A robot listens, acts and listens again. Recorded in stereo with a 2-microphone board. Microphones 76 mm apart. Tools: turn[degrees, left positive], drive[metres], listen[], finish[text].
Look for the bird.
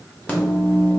Action: listen[]
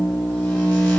Action: listen[]
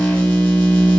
Action: finish[I can't make out a bird, only a microwave.]